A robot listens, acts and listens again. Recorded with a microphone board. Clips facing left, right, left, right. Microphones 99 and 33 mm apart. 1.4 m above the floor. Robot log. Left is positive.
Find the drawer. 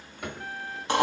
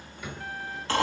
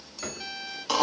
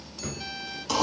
note: The drawer: about 65° left or 115° left.
cmd yaw +65
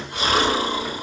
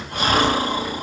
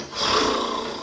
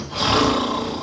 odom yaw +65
note: So it is at 10° left.
cmd yaw +10
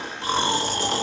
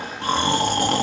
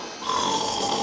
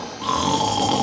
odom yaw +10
cmd idle
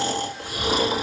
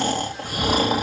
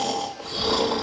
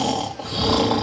cmd idle
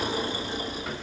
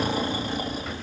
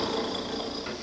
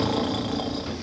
end: Facing where the drawer came from. I can't hear it now.